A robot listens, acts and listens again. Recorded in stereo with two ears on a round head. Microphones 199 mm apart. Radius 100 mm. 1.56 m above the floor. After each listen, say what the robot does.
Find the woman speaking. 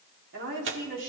Turn 65° right.
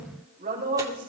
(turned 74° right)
Turn 35° right.
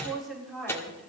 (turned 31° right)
Facing the woman speaking, over 4 m away.